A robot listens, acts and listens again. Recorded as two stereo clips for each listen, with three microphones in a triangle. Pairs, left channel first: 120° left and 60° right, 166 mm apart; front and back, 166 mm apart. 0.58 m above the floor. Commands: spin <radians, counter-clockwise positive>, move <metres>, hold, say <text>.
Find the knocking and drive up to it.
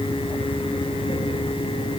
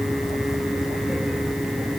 hold
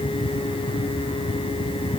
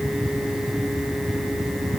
hold
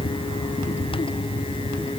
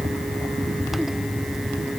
say I can't make out knocking.